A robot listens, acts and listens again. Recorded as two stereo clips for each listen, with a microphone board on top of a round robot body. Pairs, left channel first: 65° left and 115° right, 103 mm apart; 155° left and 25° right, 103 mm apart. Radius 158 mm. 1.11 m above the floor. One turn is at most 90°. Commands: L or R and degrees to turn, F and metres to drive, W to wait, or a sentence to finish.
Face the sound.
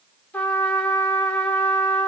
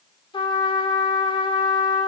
L90
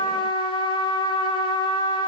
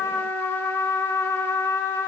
L90
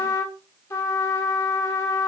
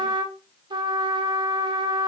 L10
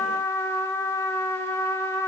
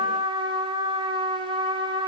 Found it: a trumpet, straight ahead, 1 to 2 m away.